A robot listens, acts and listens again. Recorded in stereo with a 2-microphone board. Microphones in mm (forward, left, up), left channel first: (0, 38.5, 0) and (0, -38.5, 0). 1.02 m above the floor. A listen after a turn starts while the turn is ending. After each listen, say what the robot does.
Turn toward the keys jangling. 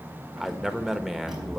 Turn 30° right.
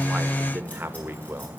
Keep listening.
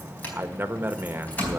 Turn 20° left.
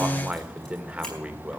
Keep listening.
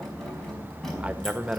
Facing the keys jangling.